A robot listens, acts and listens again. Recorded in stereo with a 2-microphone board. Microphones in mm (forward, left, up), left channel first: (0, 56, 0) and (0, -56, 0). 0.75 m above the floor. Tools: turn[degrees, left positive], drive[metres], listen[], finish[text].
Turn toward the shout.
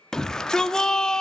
Action: turn[30]
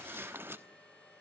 Action: listen[]
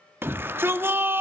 Thought: So it is at 20° right.
Action: turn[-20]
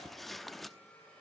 Action: listen[]
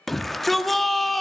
Action: finish[Found it: a shout, straight ahead, 1 to 2 m away.]